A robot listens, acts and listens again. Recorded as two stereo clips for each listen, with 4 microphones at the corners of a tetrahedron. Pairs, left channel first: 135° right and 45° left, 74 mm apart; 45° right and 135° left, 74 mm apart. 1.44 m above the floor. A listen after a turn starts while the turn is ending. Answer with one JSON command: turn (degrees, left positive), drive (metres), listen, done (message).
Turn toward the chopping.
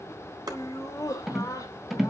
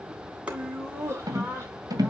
{"turn": 65}
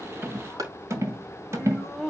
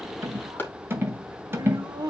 {"turn": 15}
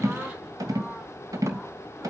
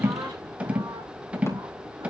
{"listen": true}
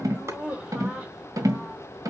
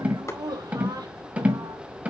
{"listen": true}
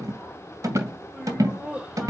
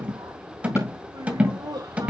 {"done": "I heard chopping from this way, but can't make it out now."}